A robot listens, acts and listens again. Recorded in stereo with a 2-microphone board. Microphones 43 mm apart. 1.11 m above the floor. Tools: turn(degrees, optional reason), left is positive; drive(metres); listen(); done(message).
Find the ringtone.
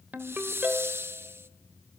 turn(degrees=-40, reason="The ringtone: about 40° right or 140° right.")
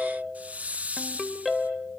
done("Found it: a ringtone, straight ahead, 2 to 4 m away.")